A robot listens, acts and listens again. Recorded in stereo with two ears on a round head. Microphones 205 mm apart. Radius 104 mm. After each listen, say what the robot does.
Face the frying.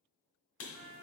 Keep listening.
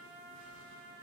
Keep listening.
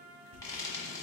Turn 15° left.
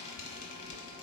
Turn 150° left.
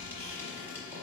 Turn 10° right.
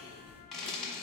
Facing the frying, 1 to 2 m away.